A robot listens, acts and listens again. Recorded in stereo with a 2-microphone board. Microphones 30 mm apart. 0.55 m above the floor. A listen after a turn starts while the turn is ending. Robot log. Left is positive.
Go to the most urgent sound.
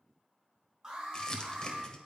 note: The alarm: about 25° right or 155° right.
cmd yaw -25
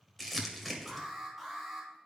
cmd fwd 1.0
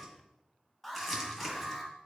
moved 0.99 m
cmd fwd 1.0
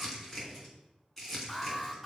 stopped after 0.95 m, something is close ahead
end: Arrived at the alarm, straight ahead.